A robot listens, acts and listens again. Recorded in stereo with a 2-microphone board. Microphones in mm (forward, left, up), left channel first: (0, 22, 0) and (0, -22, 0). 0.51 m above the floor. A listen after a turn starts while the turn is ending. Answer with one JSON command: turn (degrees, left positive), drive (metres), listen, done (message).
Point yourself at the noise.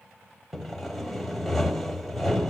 {"turn": 30}
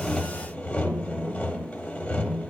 {"turn": 150}
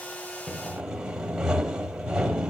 {"turn": -20}
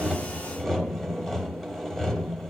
{"done": "Found it: sawing, straight ahead, under 1 m away."}